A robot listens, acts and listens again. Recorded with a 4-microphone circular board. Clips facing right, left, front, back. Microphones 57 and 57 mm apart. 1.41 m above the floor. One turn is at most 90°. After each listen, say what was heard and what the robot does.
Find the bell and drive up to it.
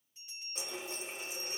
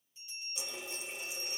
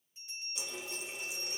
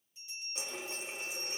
The bell: 45° right. Turn 45° right.
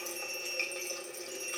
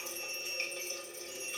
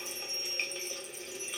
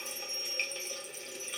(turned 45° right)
Keep listening.
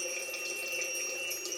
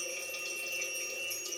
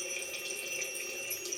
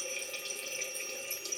Keep listening.
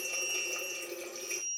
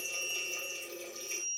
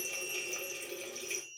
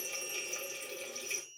Drive 1.0 m forward.
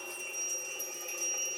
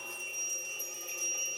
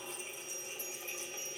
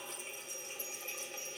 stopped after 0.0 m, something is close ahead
Keep listening.
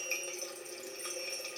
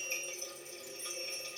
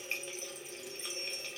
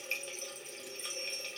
Keep listening.
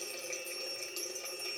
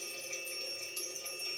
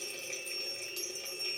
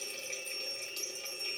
I heard a bell from this way, but can't make it out now. I did not reach it.